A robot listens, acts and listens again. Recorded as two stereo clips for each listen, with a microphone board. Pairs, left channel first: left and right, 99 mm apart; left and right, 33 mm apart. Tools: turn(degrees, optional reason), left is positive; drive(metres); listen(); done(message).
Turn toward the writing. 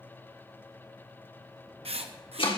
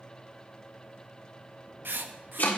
turn(degrees=-90)
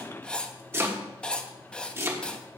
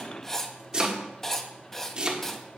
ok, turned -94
turn(degrees=10, reason="So it is at 10° left.")
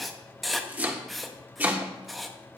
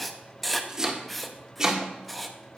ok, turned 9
done("Facing the writing.")